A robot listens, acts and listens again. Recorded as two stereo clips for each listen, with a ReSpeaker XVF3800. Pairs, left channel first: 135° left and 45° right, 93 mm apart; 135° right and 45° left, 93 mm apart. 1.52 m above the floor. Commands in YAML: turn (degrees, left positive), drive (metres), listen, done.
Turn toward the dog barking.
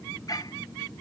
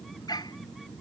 turn: 180
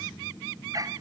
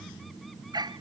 done: "Facing the dog barking."